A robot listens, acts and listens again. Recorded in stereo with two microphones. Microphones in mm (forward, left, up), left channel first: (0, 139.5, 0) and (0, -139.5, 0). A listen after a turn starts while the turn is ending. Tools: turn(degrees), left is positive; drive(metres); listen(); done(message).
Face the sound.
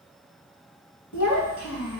turn(degrees=75)
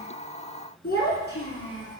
turn(degrees=45)
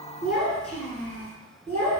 turn(degrees=10)
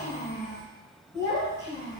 turn(degrees=10)
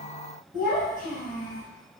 done("Facing the child speaking, 2 to 4 m away.")